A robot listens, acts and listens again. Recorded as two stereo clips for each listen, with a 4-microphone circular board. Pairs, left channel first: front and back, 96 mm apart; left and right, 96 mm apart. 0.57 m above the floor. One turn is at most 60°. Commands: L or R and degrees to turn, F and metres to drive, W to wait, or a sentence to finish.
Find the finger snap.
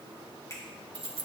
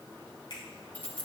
L60
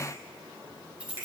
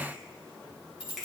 W
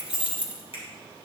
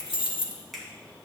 Facing the finger snap.